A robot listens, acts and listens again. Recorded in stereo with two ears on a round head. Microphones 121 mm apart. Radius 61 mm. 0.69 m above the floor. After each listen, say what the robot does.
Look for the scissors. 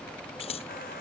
Turn 45° left.
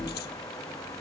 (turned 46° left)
Keep listening.
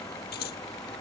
Turn 90° left.
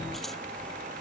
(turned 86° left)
Keep listening.
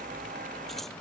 Keep listening.
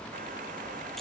I heard scissors from this way, but can't make it out now.